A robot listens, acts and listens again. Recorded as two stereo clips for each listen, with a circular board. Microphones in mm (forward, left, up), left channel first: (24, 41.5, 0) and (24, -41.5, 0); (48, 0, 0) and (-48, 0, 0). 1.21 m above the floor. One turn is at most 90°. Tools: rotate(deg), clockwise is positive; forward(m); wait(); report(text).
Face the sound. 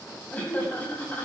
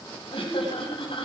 rotate(-20)
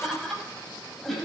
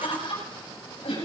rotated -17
report("Found it: laughter, straight ahead, over 4 m away.")